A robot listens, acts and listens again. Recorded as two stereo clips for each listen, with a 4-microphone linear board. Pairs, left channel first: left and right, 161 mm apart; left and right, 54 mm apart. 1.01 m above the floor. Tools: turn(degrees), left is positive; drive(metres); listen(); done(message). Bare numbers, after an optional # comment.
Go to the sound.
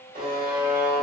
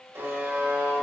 # The buzzer: about 65° right or 115° right.
turn(-65)
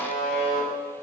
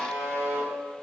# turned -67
# So it is at 50° right.
turn(-50)
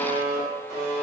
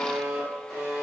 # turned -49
drive(1.0)
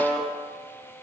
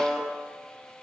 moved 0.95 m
drive(1.0)
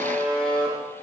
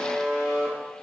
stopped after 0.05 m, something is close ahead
done("I am next to the buzzer.")